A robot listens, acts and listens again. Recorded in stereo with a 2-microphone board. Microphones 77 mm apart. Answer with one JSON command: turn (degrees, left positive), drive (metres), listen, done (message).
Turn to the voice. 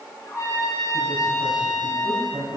{"turn": -70}
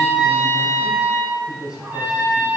{"turn": -10}
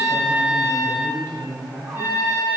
{"done": "Found it: a man speaking, straight ahead."}